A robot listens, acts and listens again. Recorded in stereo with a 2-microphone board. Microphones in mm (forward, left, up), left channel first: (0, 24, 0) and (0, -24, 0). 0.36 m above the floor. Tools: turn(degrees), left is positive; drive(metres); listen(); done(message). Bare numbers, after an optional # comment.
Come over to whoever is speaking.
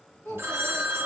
turn(90)
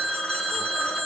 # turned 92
listen()
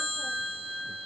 listen()
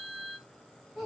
drive(1.0)
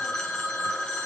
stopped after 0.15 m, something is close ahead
listen()
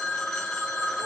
listen()
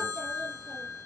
done("Facing where the child speaking came from. I can't hear it now. I did not reach it.")